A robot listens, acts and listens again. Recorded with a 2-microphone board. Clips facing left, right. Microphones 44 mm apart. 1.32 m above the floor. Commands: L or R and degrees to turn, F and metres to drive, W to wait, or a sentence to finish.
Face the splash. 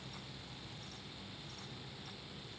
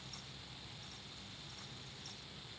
W
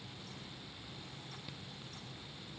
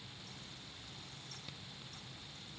W
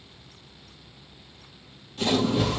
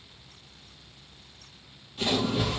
R30
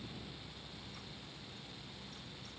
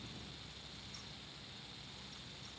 W
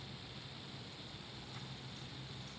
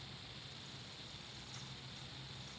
I heard a splash, but can't make it out now. It was about 20° left or 140° right.